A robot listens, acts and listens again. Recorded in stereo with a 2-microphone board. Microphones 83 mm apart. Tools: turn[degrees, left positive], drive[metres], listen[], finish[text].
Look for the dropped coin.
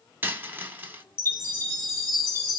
Thought: The dropped coin: about 25° right or 155° right.
Action: turn[-25]
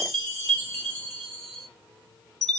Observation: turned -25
Action: listen[]
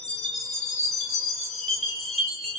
Action: finish[I heard a dropped coin, but can't make it out now. It was about straight ahead or 130° right.]